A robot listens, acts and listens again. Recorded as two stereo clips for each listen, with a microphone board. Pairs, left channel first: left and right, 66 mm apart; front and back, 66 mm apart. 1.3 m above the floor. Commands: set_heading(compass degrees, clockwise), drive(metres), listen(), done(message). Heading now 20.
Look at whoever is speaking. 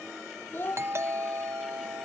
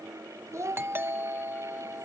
set_heading(235)
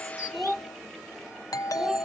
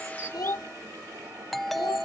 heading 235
done("Found it: a child speaking, straight ahead.")